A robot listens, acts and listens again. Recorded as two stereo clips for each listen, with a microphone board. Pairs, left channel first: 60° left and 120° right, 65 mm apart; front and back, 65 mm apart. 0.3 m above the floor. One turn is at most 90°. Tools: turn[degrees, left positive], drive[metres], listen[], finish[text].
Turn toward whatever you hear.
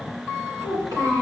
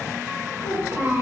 Thought: The child speaking: 135° right.
Action: turn[-90]
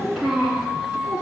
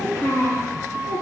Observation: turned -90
Thought: The child speaking is now 45° right.
Action: turn[-45]
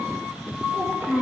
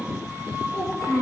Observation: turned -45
Action: finish[Facing the child speaking.]